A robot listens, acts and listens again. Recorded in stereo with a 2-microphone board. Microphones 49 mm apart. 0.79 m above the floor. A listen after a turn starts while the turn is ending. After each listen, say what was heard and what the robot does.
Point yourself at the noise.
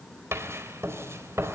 The writing: about 65° right or 115° right. Turn 65° right.
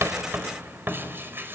So it is at 50° right. Turn 50° right.
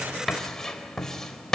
The writing is now 10° left. Turn 10° left.
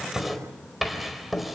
Found it: writing, straight ahead, over 4 m away.